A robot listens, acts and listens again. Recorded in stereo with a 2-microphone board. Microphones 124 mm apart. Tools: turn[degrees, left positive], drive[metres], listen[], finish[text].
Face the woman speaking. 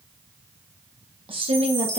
Thought: The woman speaking: about 55° right or 125° right.
Action: turn[-55]
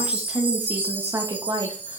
Thought: So it is at 35° right.
Action: turn[-35]
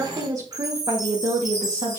Thought: The woman speaking is now 50° right.
Action: turn[-50]
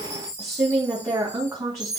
Thought: The woman speaking is now 25° right.
Action: turn[-25]
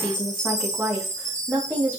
Thought: The woman speaking is now 10° right.
Action: turn[-10]
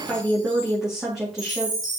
Action: finish[Found it: a woman speaking, straight ahead, 2 to 4 m away.]